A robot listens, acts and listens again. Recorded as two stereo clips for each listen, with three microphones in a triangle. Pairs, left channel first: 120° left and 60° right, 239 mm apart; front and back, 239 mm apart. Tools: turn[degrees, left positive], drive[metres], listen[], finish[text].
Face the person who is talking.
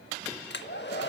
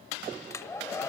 Action: listen[]
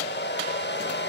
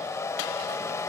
Action: listen[]
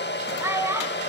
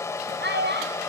Thought: The child speaking: 140° right.
Action: turn[-140]
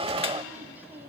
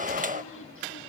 Action: listen[]
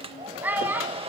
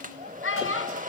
Thought: The child speaking is now 25° left.
Action: turn[25]
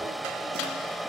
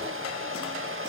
Action: listen[]
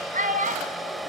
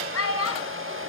Action: finish[Found it: a child speaking, straight ahead, 2 to 4 m away.]